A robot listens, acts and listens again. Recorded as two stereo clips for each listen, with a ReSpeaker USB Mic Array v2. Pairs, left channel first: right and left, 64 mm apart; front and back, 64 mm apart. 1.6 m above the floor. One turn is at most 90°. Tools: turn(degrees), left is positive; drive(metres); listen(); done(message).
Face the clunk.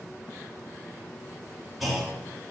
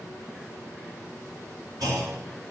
turn(degrees=90)
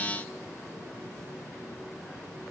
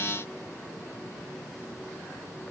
turn(degrees=90)
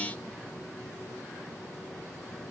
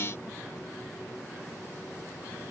done("Facing where the clunk came from. I can't hear it now.")